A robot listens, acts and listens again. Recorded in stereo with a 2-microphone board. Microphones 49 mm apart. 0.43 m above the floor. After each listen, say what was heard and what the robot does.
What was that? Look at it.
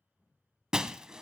Turn 30° right.
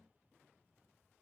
Keep listening.
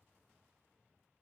I heard breaking glass, but can't make it out now. It was about 15° left or 135° right.